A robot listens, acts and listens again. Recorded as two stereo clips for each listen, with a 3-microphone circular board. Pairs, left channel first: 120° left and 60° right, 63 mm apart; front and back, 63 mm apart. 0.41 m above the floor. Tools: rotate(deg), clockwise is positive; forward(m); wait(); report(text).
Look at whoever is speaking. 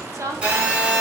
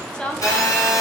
rotate(70)
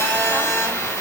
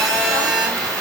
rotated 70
wait()
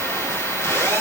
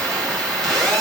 wait()
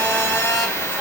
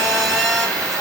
report("I heard a woman speaking from this way, but can't make it out now.")